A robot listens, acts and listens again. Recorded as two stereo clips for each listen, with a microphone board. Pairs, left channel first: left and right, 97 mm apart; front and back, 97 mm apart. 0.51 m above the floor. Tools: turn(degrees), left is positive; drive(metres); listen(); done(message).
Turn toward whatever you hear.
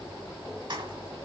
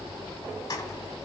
turn(degrees=-55)
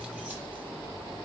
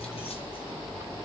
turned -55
listen()
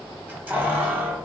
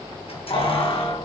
turn(degrees=-15)
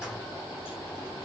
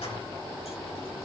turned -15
listen()
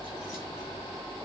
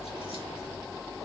listen()
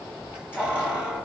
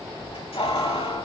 turn(degrees=-10)
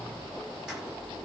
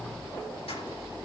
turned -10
listen()
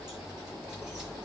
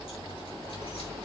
listen()
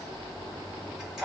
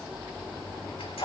done("Found it: keys jangling, straight ahead.")